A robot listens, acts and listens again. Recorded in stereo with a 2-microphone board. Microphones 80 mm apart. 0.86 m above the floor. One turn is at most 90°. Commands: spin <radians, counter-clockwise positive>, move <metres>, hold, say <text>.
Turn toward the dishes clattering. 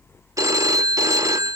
hold
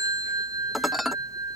spin -0.52
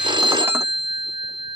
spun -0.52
hold
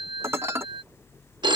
spin -1.57
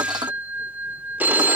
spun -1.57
spin -1.05
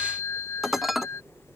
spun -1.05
say Facing the dishes clattering.